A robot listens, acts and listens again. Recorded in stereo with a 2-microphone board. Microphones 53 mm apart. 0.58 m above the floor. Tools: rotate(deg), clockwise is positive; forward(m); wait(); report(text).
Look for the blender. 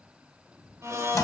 rotate(70)
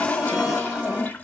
wait()
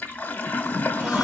wait()
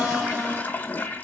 report("I heard a blender, but can't make it out now. It was about straight ahead or 40° right.")